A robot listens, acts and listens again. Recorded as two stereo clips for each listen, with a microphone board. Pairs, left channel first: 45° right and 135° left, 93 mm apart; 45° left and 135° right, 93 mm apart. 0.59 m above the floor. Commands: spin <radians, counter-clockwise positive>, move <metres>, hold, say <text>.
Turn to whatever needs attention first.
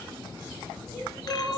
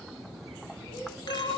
spin 0.79
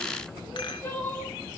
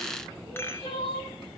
spin 0.44
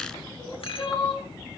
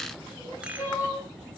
spin -0.26
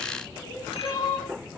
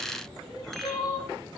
say Found it: crying, straight ahead, over 4 m away.